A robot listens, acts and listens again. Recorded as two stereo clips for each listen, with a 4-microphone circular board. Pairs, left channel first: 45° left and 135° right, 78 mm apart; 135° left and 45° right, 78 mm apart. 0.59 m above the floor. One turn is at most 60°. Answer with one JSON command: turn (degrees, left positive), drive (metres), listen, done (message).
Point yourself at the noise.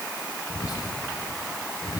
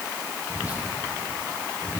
{"turn": 25}
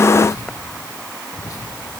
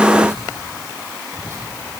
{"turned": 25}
{"done": "Facing the whispering."}